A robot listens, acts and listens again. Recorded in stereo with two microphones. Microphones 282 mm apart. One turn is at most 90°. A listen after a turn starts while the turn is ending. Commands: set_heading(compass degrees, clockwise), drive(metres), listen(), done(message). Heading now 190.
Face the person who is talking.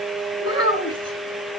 set_heading(145)
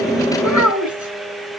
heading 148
set_heading(58)
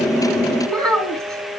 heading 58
done("Facing the child speaking.")